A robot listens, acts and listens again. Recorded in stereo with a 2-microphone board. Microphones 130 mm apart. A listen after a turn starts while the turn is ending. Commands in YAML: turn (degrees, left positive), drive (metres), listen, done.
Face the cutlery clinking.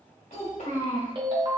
listen: true
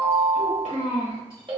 listen: true
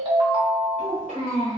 done: "I can't make out cutlery clinking, only a ringtone and a child speaking."